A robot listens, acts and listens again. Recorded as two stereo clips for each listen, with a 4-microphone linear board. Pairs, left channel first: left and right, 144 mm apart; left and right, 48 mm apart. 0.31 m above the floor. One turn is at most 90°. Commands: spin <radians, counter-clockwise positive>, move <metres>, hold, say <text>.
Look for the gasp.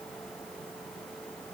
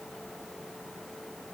hold
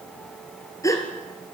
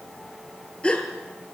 spin 0.44
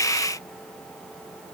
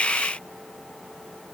hold
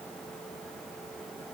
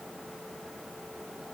say I heard a gasp, but can't make it out now. It was about straight ahead or 130° left.